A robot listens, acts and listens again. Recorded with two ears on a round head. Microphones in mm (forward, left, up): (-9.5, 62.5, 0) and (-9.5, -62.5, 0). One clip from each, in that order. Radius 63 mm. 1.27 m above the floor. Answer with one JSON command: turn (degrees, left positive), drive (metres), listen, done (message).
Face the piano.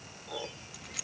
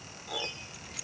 {"turn": -55}
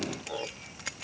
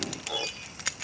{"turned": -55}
{"turn": -70}
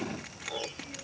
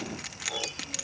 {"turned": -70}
{"turn": -25}
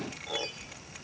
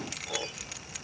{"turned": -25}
{"done": "Found it: a piano, straight ahead."}